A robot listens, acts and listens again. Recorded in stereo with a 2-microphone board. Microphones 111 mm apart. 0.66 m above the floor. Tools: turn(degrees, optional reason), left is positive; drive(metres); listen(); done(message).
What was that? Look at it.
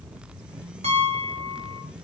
turn(degrees=-90)
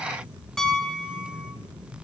done("Found it: a piano, straight ahead, 2 to 4 m away.")